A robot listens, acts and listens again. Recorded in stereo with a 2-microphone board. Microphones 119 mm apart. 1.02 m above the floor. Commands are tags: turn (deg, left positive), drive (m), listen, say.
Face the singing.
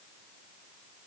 <listen/>
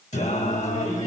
<turn deg="90"/>
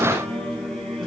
<say>Facing the singing, over 4 m away.</say>